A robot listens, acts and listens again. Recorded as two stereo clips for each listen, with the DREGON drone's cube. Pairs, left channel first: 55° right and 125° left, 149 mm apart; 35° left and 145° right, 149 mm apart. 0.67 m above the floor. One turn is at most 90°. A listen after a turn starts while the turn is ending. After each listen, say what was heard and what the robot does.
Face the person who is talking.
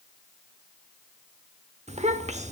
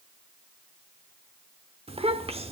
The child speaking: 165° left. Turn 90° left.
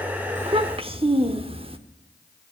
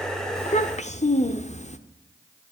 The child speaking is now 75° left. Turn 75° left.
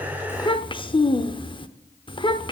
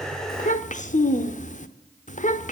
Found it: a child speaking, straight ahead, under 1 m away.